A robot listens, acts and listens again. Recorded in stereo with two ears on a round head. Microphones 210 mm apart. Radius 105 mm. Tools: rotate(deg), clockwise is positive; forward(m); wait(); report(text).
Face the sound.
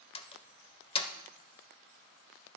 rotate(-25)
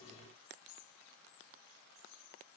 wait()
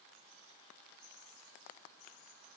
report("I heard a door slam, but can't make it out now. It was about straight ahead or 130° left.")